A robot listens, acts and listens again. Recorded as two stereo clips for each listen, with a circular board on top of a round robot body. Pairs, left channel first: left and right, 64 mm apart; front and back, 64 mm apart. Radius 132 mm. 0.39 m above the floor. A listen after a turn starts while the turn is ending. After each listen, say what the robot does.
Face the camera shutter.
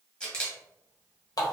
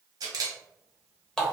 Turn 165° left.
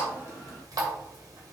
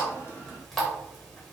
Keep listening.
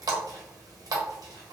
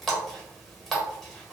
Keep listening.
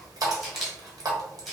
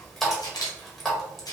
Found it: a camera shutter, straight ahead, 1 to 2 m away.